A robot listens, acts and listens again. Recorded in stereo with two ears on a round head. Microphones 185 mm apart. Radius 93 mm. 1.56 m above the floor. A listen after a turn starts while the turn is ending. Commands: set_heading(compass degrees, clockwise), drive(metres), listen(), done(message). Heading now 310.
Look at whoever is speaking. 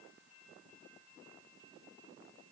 listen()
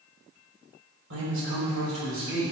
set_heading(15)
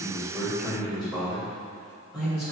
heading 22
done("Found it: a man speaking, straight ahead.")